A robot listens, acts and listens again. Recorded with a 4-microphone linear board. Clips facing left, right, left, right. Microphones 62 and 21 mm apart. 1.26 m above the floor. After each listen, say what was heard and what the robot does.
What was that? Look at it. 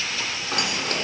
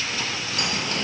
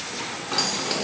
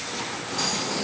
Turn 90° left.
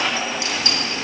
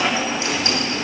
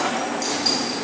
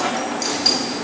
So it is at 40° right. Turn 40° right.
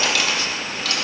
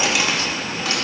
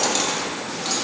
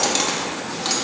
The keys jangling is now 30° right. Turn 30° right.
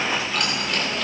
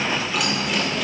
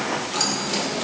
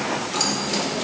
The keys jangling is now 10° right. Turn 10° right.
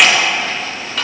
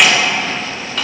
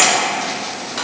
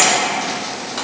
Found it: keys jangling, straight ahead.